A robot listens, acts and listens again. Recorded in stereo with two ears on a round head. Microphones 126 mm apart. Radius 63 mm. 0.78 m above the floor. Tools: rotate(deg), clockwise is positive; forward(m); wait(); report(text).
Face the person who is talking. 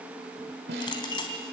wait()
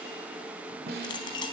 wait()
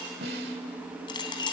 report("I can't make out anyone speaking to turn to.")